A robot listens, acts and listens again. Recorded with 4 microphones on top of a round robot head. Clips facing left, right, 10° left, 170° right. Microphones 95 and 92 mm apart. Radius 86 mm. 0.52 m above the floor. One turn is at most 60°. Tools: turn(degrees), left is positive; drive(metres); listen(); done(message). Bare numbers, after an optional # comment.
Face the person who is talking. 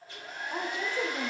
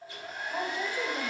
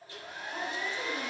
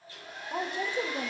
# The woman speaking: 155° left.
turn(60)
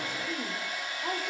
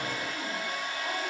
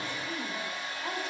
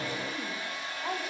# The woman speaking is now 110° left.
turn(60)
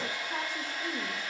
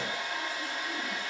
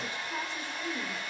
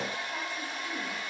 # Nothing new. It was at 50° left.
turn(50)
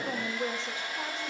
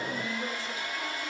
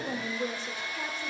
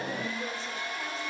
# The woman speaking is now 25° left.
turn(25)
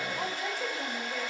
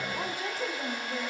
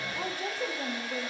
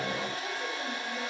listen()
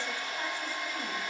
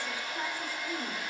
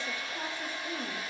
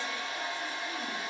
listen()
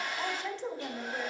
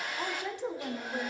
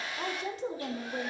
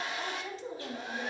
# The woman speaking is now 15° right.
turn(-15)
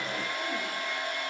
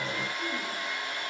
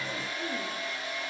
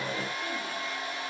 listen()
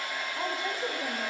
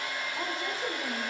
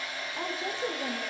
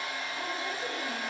done("Facing the woman speaking.")